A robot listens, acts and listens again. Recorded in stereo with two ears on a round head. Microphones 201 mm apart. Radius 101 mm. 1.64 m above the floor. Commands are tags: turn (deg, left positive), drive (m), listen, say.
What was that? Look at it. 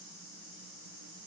<listen/>
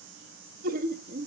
<turn deg="-30"/>
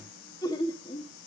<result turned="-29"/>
<turn deg="25"/>
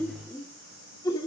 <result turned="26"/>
<turn deg="20"/>
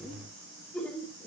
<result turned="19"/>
<turn deg="10"/>
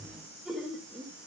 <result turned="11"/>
<say>Found it: laughter, straight ahead, 2 to 4 m away.</say>